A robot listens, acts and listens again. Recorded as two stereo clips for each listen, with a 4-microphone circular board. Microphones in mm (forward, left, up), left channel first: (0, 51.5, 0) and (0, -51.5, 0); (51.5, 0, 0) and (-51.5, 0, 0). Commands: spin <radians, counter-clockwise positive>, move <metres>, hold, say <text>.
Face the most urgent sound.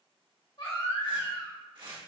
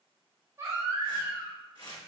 spin 2.09
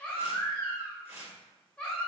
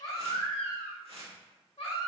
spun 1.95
spin 0.17
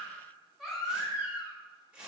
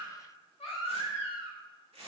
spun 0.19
say Found it: a baby crying, straight ahead.